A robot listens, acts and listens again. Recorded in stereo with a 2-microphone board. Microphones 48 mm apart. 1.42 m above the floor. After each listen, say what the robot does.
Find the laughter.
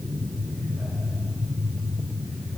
Keep listening.
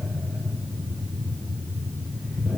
Keep listening.
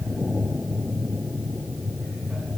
I can't make out laughter to turn to.